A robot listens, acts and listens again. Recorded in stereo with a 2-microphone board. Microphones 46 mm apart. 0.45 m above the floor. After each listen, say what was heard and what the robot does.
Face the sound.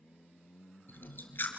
The chewing: about 45° left or 135° left. Turn 45° left.
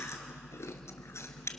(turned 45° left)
So it is at 90° left. Turn 90° left.
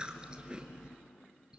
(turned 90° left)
The chewing is now 20° right. Turn 20° right.
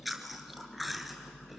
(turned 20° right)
Facing the chewing, 1 to 2 m away.